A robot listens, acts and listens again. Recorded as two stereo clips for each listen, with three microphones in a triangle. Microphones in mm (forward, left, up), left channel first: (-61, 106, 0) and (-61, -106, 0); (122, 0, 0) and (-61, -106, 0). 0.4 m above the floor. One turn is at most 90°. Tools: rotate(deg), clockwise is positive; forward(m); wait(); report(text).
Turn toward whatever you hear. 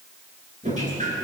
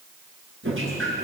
rotate(90)
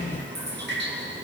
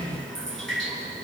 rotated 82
rotate(55)
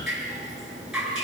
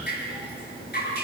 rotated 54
report("Found it: dripping, straight ahead.")